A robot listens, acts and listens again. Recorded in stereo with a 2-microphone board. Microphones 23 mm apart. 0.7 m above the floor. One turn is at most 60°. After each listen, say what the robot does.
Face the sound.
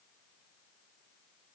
Keep listening.
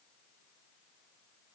Keep listening.
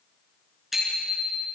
Turn 30° right.
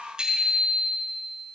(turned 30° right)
Turn 60° right.
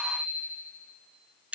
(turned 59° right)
Turn 60° right.
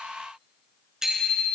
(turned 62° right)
Turn 20° right.
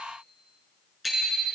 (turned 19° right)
Found it: a bicycle bell, straight ahead, over 4 m away.